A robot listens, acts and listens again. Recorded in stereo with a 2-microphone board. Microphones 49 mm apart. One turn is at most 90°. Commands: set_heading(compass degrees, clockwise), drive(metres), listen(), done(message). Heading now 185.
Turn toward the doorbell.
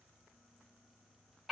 listen()
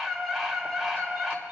listen()
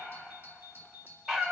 set_heading(225)
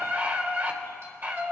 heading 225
listen()
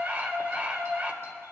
listen()
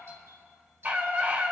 done("I heard a doorbell, but can't make it out now. It was about straight ahead or 100° right.")